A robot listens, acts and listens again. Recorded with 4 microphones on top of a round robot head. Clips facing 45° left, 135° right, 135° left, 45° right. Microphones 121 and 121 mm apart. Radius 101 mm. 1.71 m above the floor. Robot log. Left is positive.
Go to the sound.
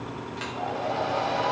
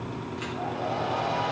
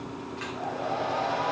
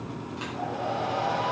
note: The hair dryer: 25° left.
cmd yaw +25
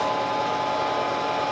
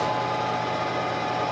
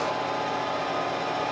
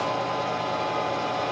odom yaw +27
cmd fwd 1.0
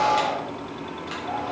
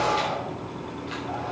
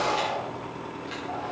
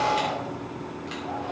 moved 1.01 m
cmd fwd 1.0
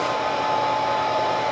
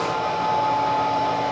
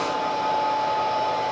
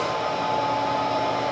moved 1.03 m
cmd fwd 1.0
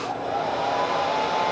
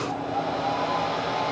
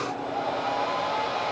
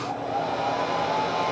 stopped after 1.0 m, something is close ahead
end: Arrived at the hair dryer, straight ahead.